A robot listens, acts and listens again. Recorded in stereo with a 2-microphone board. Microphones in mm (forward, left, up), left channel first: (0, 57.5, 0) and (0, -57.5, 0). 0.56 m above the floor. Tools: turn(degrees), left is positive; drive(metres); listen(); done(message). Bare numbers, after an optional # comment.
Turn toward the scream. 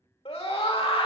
# The scream: about 60° left or 120° left.
turn(60)
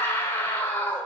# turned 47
# So it is at 25° left.
turn(25)
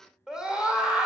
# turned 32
done("Found it: a scream, straight ahead.")